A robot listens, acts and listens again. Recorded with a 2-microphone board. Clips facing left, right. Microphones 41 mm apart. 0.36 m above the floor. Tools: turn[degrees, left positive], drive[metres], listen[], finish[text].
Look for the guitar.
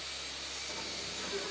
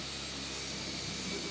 Action: listen[]
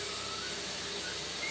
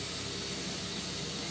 Action: listen[]
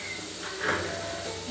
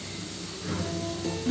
Thought: The guitar: about 75° right or 105° right.
Action: turn[-75]
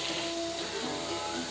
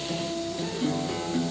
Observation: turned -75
Action: finish[Found it: a guitar, straight ahead.]